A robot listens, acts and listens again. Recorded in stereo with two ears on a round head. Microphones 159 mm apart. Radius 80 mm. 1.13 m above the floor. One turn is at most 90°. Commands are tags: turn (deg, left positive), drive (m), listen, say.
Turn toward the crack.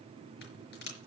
<turn deg="65"/>
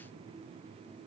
<listen/>
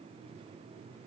<say>I heard a crack, but can't make it out now. It was about straight ahead or 50° left.</say>